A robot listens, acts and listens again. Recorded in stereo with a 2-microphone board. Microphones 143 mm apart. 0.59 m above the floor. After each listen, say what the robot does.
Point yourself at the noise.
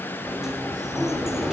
Turn 30° right.
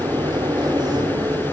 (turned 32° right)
Turn 145° right.
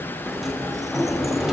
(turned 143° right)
Found it: a sliding door, straight ahead.